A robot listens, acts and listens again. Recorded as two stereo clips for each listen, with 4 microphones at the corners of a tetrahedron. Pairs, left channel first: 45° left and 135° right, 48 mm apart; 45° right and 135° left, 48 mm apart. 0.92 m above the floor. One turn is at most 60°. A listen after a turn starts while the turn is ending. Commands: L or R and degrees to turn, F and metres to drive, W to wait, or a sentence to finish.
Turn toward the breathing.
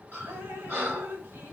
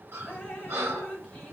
L60
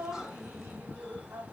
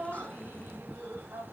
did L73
L60
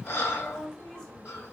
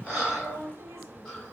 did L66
L25
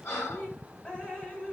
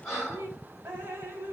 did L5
L25
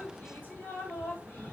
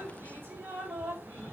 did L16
W
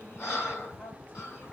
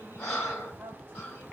Found it: breathing, straight ahead, 2 to 4 m away.